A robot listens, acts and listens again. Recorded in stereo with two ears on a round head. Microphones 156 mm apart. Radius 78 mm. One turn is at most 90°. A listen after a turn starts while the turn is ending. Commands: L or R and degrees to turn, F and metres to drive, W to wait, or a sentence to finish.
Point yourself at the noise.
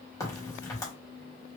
L20
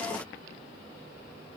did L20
W
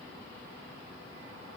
I heard a crack, but can't make it out now. It was about straight ahead or 140° left.